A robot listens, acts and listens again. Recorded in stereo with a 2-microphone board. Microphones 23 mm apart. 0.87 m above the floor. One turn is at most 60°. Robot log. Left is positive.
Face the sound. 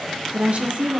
cmd yaw -60
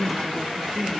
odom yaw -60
note: So it is at 20° right.
cmd yaw -20
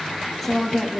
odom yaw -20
note: The woman speaking is now 15° left.
cmd yaw +15
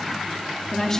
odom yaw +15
note: The woman speaking is now 25° left.
cmd yaw +25
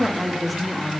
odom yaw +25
end: Facing the woman speaking, 1 to 2 m away.